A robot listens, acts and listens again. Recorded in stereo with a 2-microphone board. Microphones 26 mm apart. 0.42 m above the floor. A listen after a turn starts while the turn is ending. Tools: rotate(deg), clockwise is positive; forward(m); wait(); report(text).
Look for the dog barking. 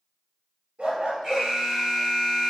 rotate(70)
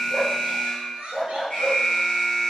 report("Found it: a dog barking, straight ahead.")